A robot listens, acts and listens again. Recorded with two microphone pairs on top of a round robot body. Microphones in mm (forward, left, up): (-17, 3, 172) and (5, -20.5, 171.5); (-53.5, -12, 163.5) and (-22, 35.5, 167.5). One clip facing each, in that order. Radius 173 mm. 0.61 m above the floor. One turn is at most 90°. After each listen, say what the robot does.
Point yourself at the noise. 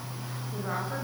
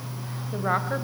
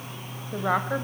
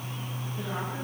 Turn 90° right.
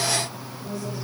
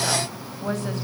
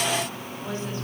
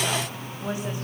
Turn 20° right.
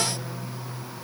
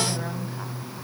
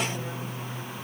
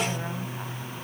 Keep listening.
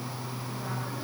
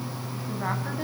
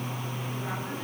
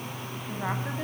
Facing the woman speaking, over 4 m away.